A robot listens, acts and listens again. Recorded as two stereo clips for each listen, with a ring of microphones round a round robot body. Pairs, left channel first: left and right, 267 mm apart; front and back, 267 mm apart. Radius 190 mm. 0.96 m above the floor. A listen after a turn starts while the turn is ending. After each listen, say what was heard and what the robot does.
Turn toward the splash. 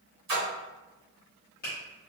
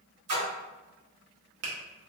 The splash: 140° right. Turn 140° right.
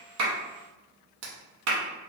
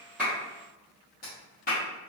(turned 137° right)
I heard a splash from this way, but can't make it out now.